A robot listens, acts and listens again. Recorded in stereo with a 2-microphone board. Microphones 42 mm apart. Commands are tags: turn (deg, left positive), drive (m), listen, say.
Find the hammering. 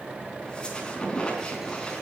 <listen/>
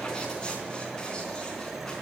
<listen/>
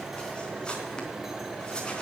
<say>I can't make out hammering to turn to.</say>